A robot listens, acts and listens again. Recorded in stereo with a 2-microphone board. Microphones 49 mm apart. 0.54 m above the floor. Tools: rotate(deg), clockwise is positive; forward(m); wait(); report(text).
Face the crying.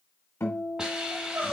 rotate(65)
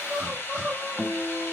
report("Facing the crying, 1 to 2 m away.")